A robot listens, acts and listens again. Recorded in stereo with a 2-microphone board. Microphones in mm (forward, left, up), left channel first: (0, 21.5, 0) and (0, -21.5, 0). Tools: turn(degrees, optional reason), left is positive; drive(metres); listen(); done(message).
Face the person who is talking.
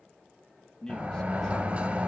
turn(degrees=30)
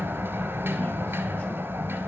listen()
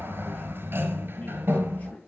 turn(degrees=135, reason="So it is at 135° left.")
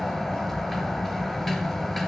listen()
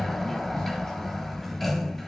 listen()
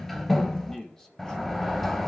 turn(degrees=15, reason="The man speaking is now 15° left.")
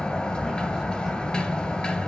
listen()
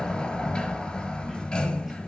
listen()
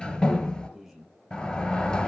done("Facing the man speaking, 1 to 2 m away.")